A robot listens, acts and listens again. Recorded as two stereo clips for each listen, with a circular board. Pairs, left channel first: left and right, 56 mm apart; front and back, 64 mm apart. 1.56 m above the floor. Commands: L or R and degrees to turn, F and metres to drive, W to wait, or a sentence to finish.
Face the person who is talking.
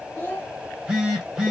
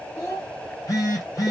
L35
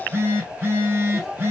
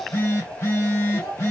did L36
Found it: a child speaking, straight ahead, 1 to 2 m away.